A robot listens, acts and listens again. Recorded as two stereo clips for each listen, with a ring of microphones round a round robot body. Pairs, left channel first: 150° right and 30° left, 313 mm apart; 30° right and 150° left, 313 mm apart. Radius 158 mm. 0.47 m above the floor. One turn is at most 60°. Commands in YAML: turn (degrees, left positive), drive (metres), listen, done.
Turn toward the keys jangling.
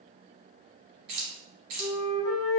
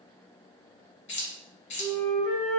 turn: 25
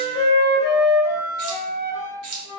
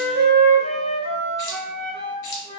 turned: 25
done: "Found it: keys jangling, straight ahead."